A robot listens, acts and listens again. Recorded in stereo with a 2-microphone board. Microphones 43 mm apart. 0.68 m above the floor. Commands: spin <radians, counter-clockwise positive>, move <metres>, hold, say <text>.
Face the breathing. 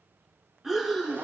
spin -0.52
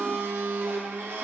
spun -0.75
hold
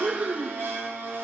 spin -2.27
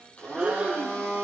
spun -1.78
spin -0.52
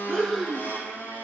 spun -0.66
spin 0.17
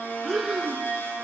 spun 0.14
say Facing the breathing.